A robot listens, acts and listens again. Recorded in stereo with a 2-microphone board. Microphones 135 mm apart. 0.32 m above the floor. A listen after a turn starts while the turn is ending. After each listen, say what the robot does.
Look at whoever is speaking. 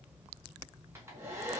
Keep listening.
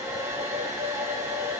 Keep listening.
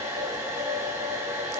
I can't make out anyone speaking, only a hair dryer.